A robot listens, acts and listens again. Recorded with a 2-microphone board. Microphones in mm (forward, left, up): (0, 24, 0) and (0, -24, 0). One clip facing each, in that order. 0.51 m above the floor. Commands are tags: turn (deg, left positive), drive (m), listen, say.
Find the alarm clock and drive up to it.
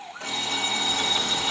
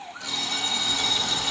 <turn deg="25"/>
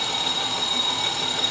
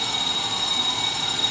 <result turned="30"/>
<drive m="1.0"/>
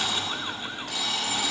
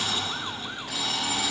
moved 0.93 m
<drive m="1.0"/>
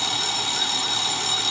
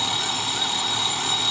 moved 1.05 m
<turn deg="-15"/>
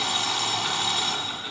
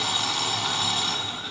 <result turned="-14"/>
<drive m="1.0"/>
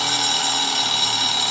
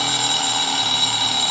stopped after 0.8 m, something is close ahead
<say>Arrived at the alarm clock, straight ahead.</say>